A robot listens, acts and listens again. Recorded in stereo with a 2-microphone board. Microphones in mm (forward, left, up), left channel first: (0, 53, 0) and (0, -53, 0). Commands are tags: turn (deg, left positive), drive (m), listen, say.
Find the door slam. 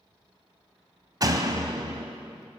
<turn deg="-35"/>
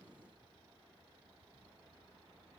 <listen/>
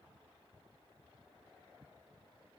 <say>I heard a door slam, but can't make it out now. It was about straight ahead or 110° right.</say>